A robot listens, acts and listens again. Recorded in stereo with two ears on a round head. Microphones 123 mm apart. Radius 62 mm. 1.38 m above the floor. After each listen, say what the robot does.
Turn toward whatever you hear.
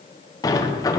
Turn 25° left.
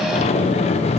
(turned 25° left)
Turn 130° left.
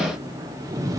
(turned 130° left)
Turn 25° right.
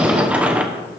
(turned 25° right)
Turn 10° right.
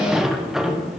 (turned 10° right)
Facing the sliding door, under 1 m away.